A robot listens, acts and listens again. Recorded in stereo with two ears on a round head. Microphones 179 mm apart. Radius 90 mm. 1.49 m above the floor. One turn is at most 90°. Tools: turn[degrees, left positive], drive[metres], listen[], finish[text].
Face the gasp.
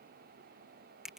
Action: listen[]
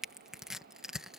Action: listen[]
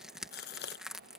Thought: The gasp: about 55° left or 125° left.
Action: turn[55]
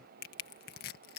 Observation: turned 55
Action: listen[]
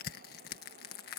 Action: finish[I heard a gasp, but can't make it out now. It was about straight ahead or 70° left.]